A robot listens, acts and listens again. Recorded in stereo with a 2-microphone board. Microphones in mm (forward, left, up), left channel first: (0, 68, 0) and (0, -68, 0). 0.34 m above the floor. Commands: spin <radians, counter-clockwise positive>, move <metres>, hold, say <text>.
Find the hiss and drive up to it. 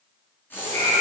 spin 0.52
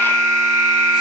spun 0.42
hold
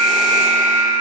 hold
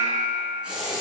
spin -0.17
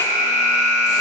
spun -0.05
hold
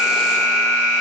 hold
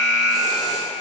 say I heard a hiss from this way, but can't make it out now. I did not reach it.